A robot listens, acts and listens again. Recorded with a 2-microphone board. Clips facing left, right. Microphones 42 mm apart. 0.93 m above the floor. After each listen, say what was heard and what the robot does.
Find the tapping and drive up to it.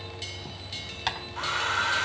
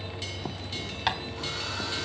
Turn 30° right.
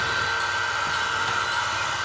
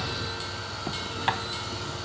Keep listening.
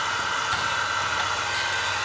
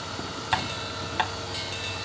Keep listening.
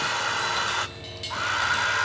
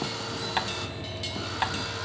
I heard tapping, but can't make it out now. It was about 25° left or 145° right. I did not reach it.